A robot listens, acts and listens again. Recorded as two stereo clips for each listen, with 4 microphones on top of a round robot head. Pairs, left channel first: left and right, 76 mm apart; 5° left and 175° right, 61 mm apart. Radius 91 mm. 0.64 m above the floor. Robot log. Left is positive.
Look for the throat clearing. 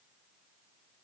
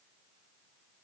cmd idle
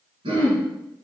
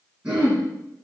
note: The throat clearing: 95° right.
cmd yaw -95
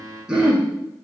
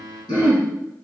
note: The throat clearing is now 10° right.
cmd yaw -10
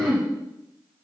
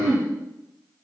end: Found it: throat clearing, straight ahead, 2 to 4 m away.